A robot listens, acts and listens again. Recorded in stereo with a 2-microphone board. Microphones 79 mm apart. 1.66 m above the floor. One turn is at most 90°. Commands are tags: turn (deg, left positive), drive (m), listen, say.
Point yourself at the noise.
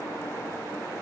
<listen/>
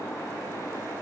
<listen/>
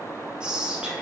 <turn deg="-30"/>
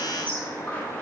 <turn deg="20"/>
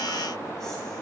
<listen/>
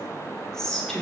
<say>Facing the whispering.</say>